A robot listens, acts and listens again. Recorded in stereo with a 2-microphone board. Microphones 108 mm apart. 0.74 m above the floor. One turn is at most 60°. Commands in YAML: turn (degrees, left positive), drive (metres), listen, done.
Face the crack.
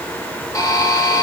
listen: true
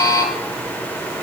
listen: true
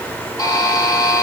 done: "I can't make out a crack, only a buzzer."